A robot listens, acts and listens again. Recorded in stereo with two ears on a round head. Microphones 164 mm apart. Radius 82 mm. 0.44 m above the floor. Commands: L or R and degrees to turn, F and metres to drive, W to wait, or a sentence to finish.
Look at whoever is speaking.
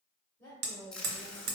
L30
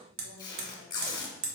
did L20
W
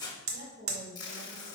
R45
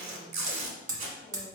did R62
L15
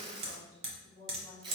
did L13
R30
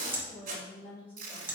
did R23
Found it: a woman speaking, straight ahead, 2 to 4 m away.